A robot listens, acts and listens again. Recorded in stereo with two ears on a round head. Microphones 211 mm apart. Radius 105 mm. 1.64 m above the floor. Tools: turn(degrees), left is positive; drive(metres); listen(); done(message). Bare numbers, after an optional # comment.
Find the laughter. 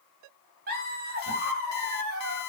# The laughter: about 40° right or 140° right.
turn(-40)
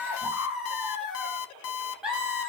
done("Found it: laughter, straight ahead, 2 to 4 m away.")